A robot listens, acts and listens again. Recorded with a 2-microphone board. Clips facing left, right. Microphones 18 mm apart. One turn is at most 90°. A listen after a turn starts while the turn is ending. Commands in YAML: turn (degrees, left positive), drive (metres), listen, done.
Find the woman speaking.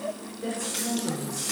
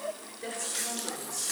turn: -30
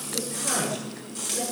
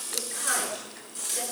turn: -90
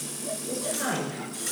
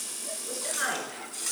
turn: -75
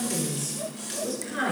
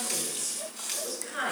turn: -10
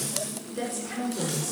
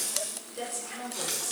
done: "Found it: a woman speaking, straight ahead."